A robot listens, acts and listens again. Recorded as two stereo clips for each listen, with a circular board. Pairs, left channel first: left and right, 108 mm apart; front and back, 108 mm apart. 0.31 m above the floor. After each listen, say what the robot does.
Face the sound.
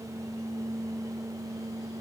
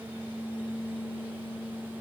Keep listening.
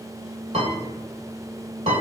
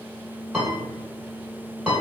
Turn 95° right.
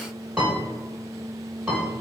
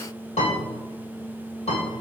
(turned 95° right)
Facing the piano, 1 to 2 m away.